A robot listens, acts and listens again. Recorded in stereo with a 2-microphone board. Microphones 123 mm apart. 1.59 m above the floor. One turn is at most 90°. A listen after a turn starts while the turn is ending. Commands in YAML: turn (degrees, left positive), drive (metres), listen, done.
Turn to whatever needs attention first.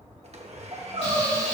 turn: -55
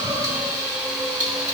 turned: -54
listen: true
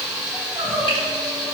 turn: -55
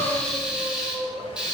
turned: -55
done: "Facing the crying."